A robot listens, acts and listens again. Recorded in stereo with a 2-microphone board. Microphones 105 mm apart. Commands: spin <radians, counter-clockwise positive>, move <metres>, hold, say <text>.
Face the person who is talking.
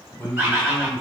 spin 0.52
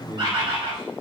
spin 2.36
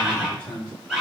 spin 0.17
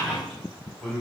say Found it: a man speaking, straight ahead, 1 to 2 m away.